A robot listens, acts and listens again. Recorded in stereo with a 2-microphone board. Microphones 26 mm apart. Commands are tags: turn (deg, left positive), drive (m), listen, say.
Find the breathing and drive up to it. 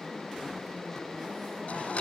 <listen/>
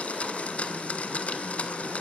<listen/>
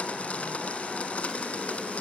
<say>I can't make out breathing, only a blender.</say>